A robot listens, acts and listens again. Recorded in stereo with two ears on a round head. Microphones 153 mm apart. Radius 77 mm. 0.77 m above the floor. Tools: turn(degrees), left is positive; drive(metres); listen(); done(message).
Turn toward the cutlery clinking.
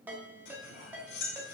turn(degrees=90)
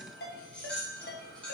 done("Facing the cutlery clinking, 1 to 2 m away.")